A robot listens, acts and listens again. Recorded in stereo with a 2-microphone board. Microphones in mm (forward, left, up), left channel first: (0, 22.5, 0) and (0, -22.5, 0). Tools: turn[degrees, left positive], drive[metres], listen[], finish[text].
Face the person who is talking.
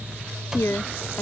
Thought: The woman speaking: about 70° left or 110° left.
Action: turn[70]
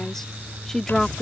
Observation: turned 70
Thought: So it is at 10° left.
Action: turn[10]
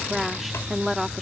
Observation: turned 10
Action: finish[Found it: a woman speaking, straight ahead.]